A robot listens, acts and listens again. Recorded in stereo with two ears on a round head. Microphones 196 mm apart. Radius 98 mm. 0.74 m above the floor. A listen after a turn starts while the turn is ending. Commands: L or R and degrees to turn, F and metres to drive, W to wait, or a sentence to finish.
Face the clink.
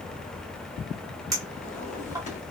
R15
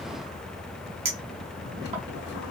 R150
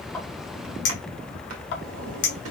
L50
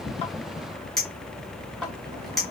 Found it: a clink, straight ahead.